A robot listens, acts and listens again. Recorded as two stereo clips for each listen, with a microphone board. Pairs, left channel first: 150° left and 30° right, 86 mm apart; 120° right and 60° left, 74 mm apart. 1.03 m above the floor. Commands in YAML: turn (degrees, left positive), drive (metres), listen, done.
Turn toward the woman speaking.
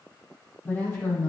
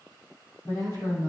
turn: -145
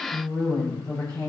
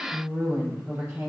done: "Facing the woman speaking, over 4 m away."